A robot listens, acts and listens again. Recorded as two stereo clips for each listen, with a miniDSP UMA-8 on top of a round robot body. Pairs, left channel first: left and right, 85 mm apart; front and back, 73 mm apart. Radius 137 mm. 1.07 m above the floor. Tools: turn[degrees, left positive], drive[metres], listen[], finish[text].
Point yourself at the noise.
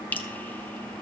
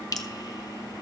Thought: The dripping: 25° left.
Action: turn[25]
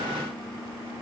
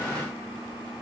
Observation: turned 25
Action: listen[]
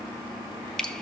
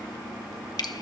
Thought: The dripping is now 10° left.
Action: turn[10]
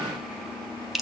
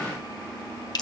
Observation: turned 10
Action: finish[Facing the dripping, 1 to 2 m away.]